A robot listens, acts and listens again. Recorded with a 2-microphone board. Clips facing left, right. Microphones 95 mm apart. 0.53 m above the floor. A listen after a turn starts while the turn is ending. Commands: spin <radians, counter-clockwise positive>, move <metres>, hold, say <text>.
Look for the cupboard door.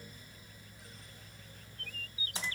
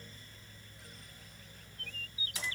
hold
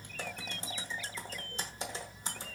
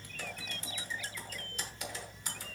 hold
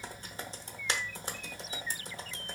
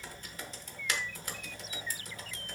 say I can't make out a cupboard door to turn to.